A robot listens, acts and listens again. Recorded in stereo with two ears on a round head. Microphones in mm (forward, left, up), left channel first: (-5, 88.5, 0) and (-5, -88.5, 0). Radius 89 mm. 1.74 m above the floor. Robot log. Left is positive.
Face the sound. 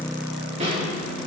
note: The snare drum: about 35° right or 145° right.
cmd yaw -35
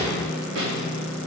note: So it is at 110° right.
cmd yaw -110
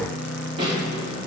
note: The snare drum is now 25° right.
cmd yaw -25
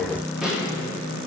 end: Facing the snare drum, 2 to 4 m away.